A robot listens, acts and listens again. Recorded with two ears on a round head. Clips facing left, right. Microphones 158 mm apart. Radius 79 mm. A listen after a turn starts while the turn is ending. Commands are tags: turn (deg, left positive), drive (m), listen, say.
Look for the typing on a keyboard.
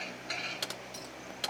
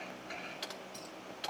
<turn deg="60"/>
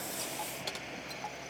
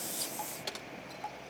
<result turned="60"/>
<say>Found it: typing on a keyboard, straight ahead.</say>